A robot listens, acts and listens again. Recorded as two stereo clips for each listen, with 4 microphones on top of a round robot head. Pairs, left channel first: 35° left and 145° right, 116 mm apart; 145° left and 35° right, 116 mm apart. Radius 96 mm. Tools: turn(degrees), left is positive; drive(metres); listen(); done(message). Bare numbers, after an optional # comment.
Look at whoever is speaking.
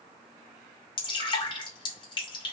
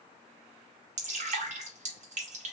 listen()
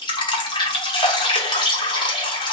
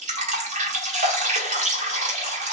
listen()
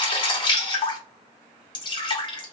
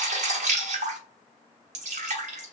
done("I can't make out anyone speaking to turn to.")